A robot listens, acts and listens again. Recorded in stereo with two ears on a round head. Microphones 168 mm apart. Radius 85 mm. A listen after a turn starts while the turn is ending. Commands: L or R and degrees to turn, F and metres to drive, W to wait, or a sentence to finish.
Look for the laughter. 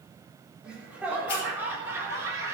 R15
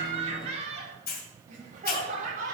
R130
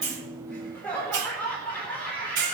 L10
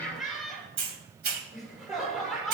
Facing the laughter, over 4 m away.